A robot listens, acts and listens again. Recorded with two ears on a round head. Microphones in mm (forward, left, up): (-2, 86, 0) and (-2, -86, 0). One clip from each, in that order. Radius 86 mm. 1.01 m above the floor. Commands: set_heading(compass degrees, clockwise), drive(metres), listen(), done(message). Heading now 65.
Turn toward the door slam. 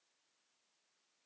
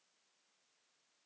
listen()
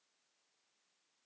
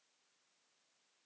listen()
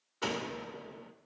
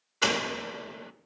set_heading(120)
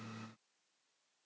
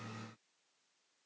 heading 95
listen()
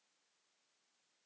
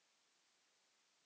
done("I heard a door slam, but can't make it out now. It was about 25° right or 95° right.")